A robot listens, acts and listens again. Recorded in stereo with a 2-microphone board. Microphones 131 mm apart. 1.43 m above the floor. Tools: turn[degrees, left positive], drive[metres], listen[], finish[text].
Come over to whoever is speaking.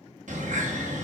Action: listen[]
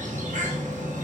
Action: listen[]
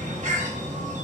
Action: finish[I can't make out anyone speaking, only a bird.]